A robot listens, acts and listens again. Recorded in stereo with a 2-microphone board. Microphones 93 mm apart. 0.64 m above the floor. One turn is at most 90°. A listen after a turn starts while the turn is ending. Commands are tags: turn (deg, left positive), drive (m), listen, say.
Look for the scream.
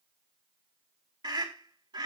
<turn deg="-65"/>
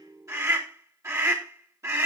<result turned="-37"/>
<turn deg="-40"/>
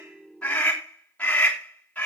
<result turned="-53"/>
<turn deg="15"/>
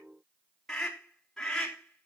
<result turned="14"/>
<say>Found it: a scream, straight ahead.</say>